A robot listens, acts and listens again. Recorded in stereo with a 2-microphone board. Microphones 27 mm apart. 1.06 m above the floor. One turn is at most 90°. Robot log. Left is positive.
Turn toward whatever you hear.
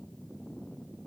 cmd idle
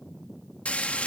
note: The frying: about 60° left or 120° left.
cmd yaw +60
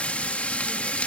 note: So it is at 60° left.
cmd yaw +60
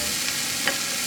end: Found it: frying, straight ahead.